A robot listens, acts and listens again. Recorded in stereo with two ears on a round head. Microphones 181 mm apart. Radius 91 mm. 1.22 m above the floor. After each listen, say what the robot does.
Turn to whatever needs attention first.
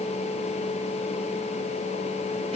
Keep listening.
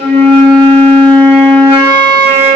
Keep listening.
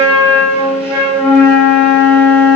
I can't make out anything urgent to turn to.